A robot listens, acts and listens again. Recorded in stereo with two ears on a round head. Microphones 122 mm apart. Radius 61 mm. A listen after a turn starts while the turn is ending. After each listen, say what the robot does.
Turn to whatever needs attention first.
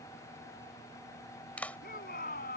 Turn 70° left.
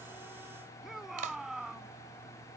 Found it: a shout, straight ahead.